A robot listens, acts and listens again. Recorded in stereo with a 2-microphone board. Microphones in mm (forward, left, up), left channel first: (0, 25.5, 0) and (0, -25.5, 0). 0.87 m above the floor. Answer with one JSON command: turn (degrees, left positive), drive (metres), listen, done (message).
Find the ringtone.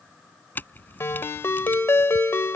{"turn": 55}
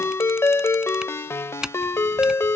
{"turn": 65}
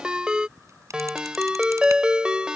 {"turn": -20}
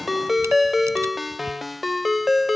{"done": "Found it: a ringtone, straight ahead."}